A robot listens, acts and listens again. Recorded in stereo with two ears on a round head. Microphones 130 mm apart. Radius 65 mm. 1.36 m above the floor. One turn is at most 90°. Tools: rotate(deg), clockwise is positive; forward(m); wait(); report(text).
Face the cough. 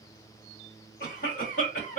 rotate(-60)
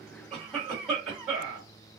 report("Found it: a cough, straight ahead.")